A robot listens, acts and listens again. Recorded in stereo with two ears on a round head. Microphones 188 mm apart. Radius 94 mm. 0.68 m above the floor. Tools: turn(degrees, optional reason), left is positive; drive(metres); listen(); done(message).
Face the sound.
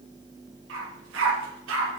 turn(degrees=-65, reason="The dog barking: about 65° right or 115° right.")
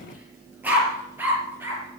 turn(degrees=-10, reason="So it is at 10° right.")
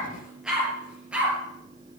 done("Found it: a dog barking, straight ahead.")